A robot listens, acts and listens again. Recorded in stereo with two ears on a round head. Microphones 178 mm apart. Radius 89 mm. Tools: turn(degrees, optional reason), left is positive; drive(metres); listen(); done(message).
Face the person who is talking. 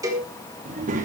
turn(degrees=-40, reason="The child speaking: about 40° right or 140° right.")
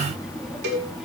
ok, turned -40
done("Found it: a child speaking, straight ahead, 2 to 4 m away.")